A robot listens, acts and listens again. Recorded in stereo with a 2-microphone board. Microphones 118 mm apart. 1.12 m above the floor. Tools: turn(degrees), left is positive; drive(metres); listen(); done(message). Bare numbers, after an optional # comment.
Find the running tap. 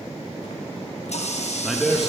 # The running tap: about 65° left or 115° left.
turn(65)
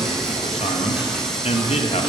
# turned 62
listen()
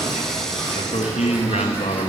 listen()
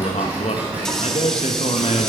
done("Facing the running tap, 1 to 2 m away.")